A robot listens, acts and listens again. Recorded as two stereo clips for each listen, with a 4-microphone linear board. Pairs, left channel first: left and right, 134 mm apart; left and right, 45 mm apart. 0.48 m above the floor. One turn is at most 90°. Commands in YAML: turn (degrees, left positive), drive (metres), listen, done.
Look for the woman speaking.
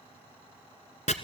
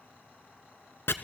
listen: true
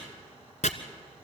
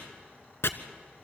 listen: true
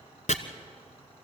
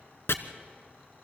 done: "I can't make out a woman speaking, only chopping."